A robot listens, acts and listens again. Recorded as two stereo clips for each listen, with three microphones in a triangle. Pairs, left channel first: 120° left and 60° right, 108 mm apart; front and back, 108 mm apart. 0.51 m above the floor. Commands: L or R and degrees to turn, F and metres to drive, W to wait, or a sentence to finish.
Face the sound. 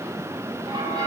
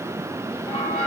R15
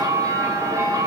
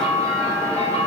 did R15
Found it: a bell, straight ahead.